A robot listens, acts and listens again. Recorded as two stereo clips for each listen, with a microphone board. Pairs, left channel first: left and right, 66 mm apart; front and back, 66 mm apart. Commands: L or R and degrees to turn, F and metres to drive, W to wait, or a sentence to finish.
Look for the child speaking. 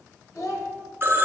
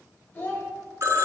L60
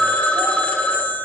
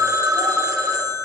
W
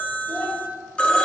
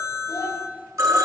L25
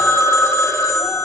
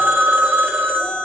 W
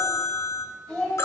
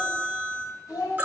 L10
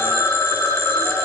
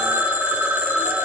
W
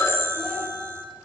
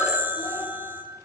W
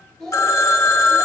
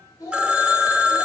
Found it: a child speaking, straight ahead.